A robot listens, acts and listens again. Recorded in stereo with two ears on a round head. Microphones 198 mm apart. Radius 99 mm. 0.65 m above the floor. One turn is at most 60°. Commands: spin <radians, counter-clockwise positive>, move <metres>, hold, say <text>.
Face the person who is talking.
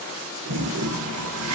hold
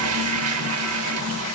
hold
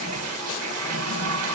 say I can't make out anyone speaking to turn to.